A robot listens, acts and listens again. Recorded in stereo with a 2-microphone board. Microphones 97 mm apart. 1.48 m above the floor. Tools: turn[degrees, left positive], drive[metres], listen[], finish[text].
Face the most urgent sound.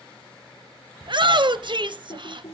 Thought: The shout: about 55° right or 125° right.
Action: turn[-55]
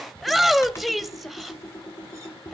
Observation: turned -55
Action: finish[Found it: a shout, straight ahead.]